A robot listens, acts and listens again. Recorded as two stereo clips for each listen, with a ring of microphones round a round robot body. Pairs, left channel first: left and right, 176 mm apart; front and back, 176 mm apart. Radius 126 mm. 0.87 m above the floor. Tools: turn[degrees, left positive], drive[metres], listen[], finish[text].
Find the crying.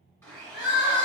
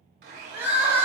Thought: The crying: 105° left.
Action: turn[105]
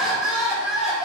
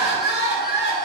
Action: finish[Found it: crying, straight ahead.]